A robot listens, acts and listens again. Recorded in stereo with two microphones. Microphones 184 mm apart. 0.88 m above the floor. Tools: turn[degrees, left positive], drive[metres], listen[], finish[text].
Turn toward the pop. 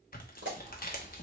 Action: turn[-90]
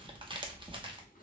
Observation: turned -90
Action: finish[I heard a pop from this way, but can't make it out now.]